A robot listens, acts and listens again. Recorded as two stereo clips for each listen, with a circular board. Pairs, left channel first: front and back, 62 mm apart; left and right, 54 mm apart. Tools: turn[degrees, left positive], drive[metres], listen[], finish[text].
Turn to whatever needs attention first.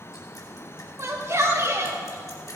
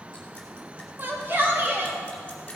Thought: The shout: 140° right.
Action: turn[-140]
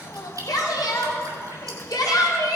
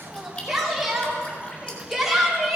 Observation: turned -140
Thought: The shout is now 10° right.
Action: turn[-10]
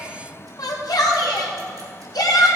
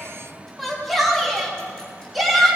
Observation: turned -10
Action: finish[Found it: a shout, straight ahead, 2 to 4 m away.]